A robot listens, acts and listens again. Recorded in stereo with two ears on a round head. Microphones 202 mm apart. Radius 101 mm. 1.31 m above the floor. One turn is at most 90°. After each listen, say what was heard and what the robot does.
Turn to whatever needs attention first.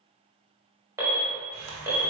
Turn 30° right.
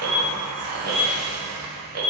So it is at 140° right. Turn 90° right.
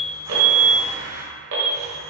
The alarm is now 65° right. Turn 65° right.
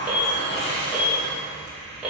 Facing the alarm, 1 to 2 m away.